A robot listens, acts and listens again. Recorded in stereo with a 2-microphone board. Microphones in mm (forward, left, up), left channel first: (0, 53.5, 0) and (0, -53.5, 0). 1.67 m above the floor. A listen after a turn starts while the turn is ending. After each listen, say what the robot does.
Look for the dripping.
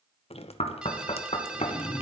Turn 70° left.
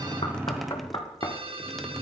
Found it: dripping, straight ahead, 1 to 2 m away.